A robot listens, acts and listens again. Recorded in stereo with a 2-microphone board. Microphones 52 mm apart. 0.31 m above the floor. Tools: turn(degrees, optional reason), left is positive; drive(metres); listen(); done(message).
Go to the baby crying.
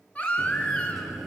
turn(degrees=30, reason="The baby crying: about 30° left or 150° left.")
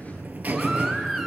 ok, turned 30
listen()
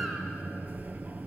listen()
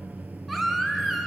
drive(metres=1.0)
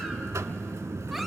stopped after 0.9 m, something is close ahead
listen()
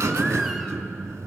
listen()
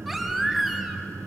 done("I heard a baby crying from this way, but can't make it out now. I did not reach it.")